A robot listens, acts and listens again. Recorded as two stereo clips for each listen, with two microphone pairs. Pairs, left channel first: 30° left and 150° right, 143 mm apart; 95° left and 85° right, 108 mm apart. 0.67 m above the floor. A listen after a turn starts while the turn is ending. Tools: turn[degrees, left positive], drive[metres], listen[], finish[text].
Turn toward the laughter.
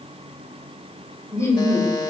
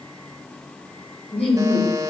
Thought: The laughter: 100° left.
Action: turn[100]
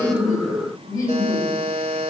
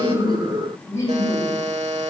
Thought: The laughter is now 35° left.
Action: turn[35]
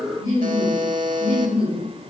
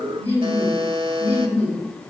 Thought: The laughter is now 30° left.
Action: turn[30]
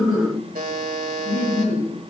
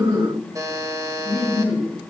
Thought: The laughter is now 10° left.
Action: turn[10]
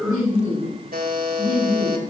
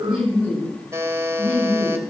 Action: finish[Facing the laughter.]